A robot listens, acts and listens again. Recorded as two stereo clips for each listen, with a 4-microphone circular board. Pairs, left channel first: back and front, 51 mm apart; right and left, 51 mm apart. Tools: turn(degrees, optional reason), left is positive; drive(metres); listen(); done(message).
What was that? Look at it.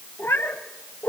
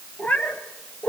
turn(degrees=-140, reason="The cat meowing: 140° right.")
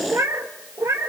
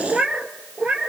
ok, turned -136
turn(degrees=25, reason="The cat meowing is now 25° left.")
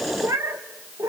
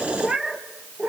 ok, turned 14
turn(degrees=20, reason="The cat meowing is now 20° left.")
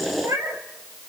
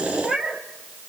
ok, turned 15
turn(degrees=15, reason="The cat meowing is now 15° left.")
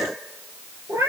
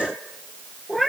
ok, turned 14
done("Found it: a cat meowing, straight ahead, 2 to 4 m away.")